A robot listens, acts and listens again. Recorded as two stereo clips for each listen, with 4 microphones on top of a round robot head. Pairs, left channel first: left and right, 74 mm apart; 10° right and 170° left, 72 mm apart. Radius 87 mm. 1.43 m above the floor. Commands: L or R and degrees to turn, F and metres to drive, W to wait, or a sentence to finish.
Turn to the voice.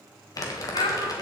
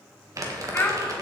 L55
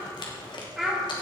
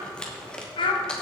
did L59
Found it: a child speaking, straight ahead, 1 to 2 m away.